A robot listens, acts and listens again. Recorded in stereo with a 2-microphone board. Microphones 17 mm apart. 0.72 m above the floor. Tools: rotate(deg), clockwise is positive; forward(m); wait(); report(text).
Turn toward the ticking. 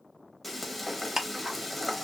rotate(35)
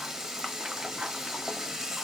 wait()
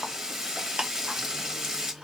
rotate(105)
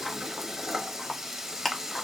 rotate(-10)
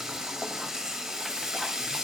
wait()
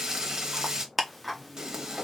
report("Facing the ticking.")